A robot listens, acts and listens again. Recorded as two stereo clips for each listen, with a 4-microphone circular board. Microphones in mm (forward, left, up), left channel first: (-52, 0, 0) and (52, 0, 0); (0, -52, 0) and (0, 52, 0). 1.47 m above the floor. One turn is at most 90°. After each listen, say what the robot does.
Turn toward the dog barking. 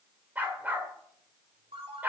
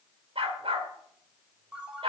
Turn 75° left.
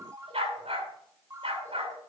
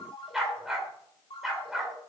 Found it: a dog barking, straight ahead.